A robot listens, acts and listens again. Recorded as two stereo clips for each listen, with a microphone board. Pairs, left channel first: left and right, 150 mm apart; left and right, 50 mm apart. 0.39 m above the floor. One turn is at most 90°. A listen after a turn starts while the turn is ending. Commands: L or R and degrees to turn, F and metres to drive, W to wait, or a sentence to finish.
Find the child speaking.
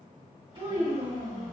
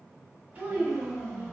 R35
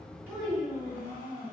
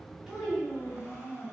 Found it: a child speaking, straight ahead.